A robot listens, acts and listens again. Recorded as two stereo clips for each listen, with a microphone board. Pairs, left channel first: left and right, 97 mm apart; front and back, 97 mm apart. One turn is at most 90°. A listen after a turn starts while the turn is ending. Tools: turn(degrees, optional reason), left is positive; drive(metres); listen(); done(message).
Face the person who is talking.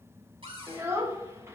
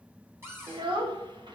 turn(degrees=-90, reason="The child speaking: 150° right.")
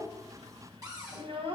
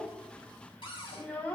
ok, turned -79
turn(degrees=-70, reason="The child speaking is now 70° right.")
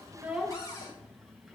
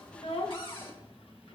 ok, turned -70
listen()
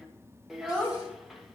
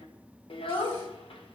done("Facing the child speaking.")